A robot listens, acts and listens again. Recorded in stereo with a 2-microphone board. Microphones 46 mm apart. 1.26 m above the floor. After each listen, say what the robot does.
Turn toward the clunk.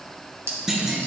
Turn 30° right.
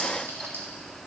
Keep listening.
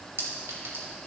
I heard a clunk, but can't make it out now. It was about 20° left or 140° right.